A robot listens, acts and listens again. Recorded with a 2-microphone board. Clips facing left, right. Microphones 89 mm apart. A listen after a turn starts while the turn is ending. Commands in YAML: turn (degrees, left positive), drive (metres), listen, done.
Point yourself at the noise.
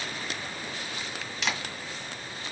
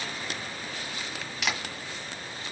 turn: -30
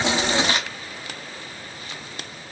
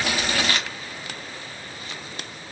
turn: 25
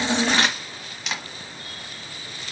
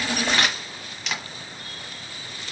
done: "Found it: a camera shutter, straight ahead, 1 to 2 m away."